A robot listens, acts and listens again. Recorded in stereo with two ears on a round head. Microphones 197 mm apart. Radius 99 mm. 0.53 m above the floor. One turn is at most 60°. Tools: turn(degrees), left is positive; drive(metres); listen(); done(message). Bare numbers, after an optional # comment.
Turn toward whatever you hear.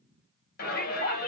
# The shout: about 45° left or 135° left.
turn(45)
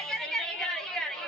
done("Facing the shout, 2 to 4 m away.")